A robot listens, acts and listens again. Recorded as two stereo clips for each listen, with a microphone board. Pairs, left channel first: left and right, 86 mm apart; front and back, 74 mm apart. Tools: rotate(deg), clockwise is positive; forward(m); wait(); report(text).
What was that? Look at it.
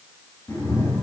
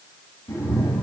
rotate(-30)
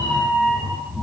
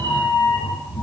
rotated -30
report("Found it: a cat meowing, straight ahead, over 4 m away.")